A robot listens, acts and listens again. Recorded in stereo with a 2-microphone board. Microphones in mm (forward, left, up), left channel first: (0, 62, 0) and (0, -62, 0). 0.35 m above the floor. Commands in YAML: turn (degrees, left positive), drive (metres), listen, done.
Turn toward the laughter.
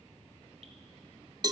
listen: true
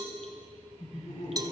turn: 70
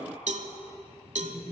turn: 30
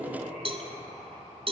done: "Facing the laughter, over 4 m away."